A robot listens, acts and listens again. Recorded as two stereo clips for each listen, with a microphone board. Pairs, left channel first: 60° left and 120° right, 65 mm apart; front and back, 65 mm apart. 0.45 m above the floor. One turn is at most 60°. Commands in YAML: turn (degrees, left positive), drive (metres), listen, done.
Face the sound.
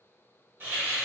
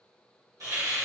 turn: -60
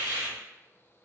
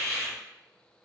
turn: -60
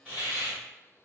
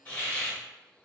turn: -60
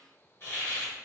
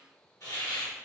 turn: 15
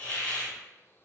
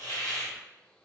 done: "Facing the hiss."